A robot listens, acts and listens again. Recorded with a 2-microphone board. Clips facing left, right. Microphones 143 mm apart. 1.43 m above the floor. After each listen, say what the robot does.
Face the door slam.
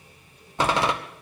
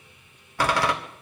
Turn 20° left.
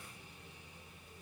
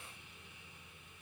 Keep listening.
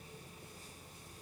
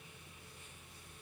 I heard a door slam, but can't make it out now. It was about straight ahead or 140° left.